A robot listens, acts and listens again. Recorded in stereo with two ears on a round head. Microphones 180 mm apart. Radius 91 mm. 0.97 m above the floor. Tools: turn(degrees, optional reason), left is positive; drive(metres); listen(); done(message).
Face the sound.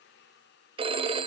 turn(degrees=-25, reason="The phone ringing: about 25° right or 155° right.")
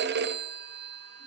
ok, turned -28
turn(degrees=-125, reason="So it is at 125° right.")
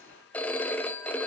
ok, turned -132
done("Facing the phone ringing, under 1 m away.")